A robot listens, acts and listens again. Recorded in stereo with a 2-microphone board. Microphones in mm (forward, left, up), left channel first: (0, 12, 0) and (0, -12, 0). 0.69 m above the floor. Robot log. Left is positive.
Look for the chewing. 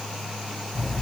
cmd idle
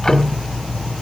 cmd idle
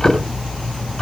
end: I can't make out chewing to turn to.